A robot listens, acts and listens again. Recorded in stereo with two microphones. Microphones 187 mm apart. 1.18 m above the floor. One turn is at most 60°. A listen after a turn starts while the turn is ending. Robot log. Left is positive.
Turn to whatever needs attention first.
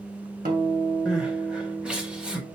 cmd yaw -30
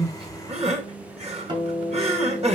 note: So it is at 145° right.
cmd yaw -60
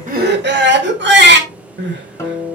note: The crying is now 105° right.
cmd yaw -60
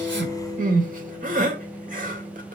note: The crying is now 50° right.
cmd yaw -50
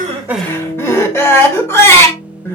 note: The crying is now 15° left.
cmd yaw +15
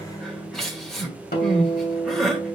end: Facing the crying, 1 to 2 m away.